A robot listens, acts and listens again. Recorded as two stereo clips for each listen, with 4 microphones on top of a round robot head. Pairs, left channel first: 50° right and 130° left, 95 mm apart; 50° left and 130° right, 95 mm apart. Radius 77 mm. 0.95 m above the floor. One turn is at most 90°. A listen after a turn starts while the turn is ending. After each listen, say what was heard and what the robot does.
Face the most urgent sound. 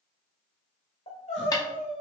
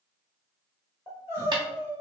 The crying: 65° right. Turn 65° right.
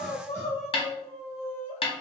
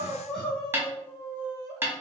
The crying is now 35° right. Turn 35° right.
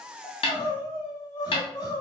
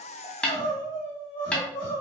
Found it: crying, straight ahead, 1 to 2 m away.